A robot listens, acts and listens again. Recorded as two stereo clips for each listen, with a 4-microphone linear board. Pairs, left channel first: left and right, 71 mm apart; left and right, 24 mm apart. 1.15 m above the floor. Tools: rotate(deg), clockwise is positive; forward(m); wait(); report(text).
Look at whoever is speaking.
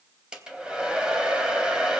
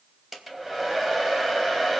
wait()
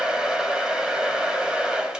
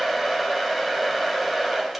wait()
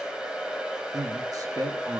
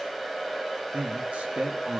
rotate(60)
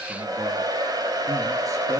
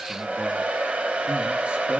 wait()
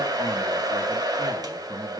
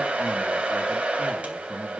rotate(55)
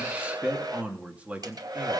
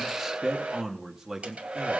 rotate(15)
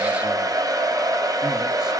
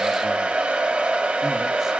wait()
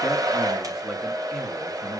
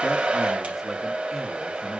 wait()
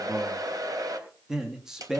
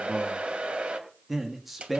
report("Found it: a man speaking, straight ahead, 2 to 4 m away.")